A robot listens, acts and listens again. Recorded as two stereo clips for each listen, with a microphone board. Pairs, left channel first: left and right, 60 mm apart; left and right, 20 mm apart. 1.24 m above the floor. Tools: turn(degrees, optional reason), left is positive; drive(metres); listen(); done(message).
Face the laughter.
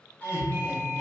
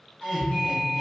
turn(degrees=-30, reason="The laughter: about 30° right or 150° right.")
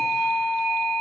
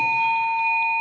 listen()
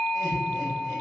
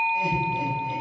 listen()
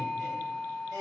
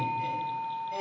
turn(degrees=-120, reason="So it is at 120° right.")
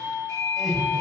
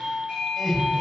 done("Facing the laughter, 1 to 2 m away.")